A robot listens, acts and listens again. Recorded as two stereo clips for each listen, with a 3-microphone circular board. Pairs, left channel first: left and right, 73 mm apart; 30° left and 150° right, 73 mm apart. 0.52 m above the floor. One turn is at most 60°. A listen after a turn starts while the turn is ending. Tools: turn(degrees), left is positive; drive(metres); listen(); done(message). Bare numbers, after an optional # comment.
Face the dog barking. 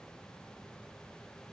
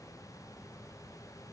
listen()
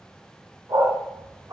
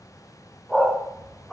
# The dog barking: 60° right.
turn(-60)
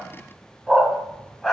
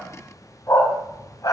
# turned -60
done("Found it: a dog barking, straight ahead, 1 to 2 m away.")